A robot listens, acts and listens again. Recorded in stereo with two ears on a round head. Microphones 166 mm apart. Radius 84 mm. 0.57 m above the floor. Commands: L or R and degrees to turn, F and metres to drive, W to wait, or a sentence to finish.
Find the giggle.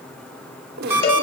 R60
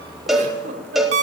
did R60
R45
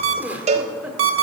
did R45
R10
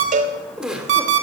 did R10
Found it: a giggle, straight ahead.